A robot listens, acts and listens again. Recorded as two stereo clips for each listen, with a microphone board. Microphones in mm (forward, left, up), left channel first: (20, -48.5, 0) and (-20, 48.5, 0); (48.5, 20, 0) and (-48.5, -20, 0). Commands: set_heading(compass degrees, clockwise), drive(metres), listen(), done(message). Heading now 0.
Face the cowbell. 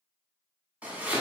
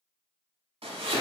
listen()
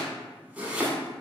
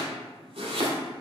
listen()
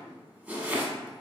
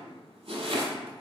done("I can't make out a cowbell to turn to.")